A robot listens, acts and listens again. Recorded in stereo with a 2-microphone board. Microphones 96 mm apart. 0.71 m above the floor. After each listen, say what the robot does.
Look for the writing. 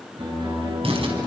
Turn 75° right.
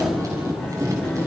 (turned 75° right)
Turn 35° right.
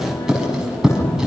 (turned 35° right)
Facing the writing.